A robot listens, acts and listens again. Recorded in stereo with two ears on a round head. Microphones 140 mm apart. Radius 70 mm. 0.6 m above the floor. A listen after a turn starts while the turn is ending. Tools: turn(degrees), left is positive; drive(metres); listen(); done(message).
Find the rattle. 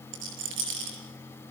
turn(degrees=-90)
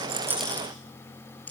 turn(degrees=10)
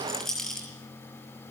done("Facing the rattle.")